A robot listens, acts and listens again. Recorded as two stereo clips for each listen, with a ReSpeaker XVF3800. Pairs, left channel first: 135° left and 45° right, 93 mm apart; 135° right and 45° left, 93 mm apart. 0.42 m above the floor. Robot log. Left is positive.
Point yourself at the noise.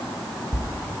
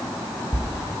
note: The writing: 175° right.
cmd yaw -175
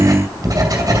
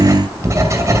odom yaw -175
end: Found it: writing, straight ahead.